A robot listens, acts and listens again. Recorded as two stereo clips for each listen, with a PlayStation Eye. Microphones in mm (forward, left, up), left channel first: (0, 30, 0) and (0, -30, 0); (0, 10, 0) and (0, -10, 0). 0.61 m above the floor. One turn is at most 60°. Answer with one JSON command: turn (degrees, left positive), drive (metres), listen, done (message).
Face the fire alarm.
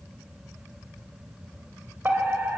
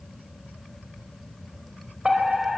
{"turn": -35}
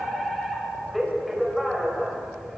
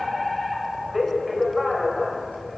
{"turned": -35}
{"done": "Facing the fire alarm, over 4 m away."}